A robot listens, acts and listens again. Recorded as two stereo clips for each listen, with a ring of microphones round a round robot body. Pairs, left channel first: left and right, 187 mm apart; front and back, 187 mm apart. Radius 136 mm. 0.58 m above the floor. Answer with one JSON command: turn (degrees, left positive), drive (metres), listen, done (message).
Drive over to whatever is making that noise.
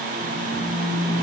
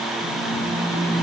{"turn": -90}
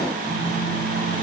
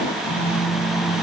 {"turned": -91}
{"drive": 1.0}
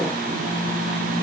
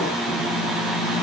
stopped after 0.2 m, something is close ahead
{"done": "Blocked. The phone buzzing is further on, straight ahead."}